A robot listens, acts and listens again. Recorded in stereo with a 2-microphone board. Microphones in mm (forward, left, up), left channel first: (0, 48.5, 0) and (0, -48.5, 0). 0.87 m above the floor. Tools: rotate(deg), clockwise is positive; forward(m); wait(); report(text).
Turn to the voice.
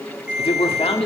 rotate(-75)
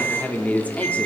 rotate(-15)
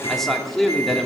report("Found it: a man speaking, straight ahead, 2 to 4 m away.")